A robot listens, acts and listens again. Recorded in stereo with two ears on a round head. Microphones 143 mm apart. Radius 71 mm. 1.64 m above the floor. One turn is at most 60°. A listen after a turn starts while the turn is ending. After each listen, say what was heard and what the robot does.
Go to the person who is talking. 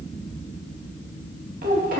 The child speaking: about 60° right or 120° right. Turn 60° right.
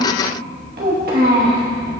So it is at 65° right. Turn 60° right.
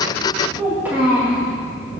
The child speaking is now 10° right. Turn 10° right.
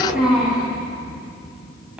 Drive 1.0 m forward.
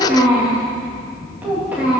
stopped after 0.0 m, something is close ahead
The child speaking is now 10° right. Turn 10° right.
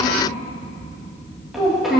Blocked. The child speaking is further on, straight ahead.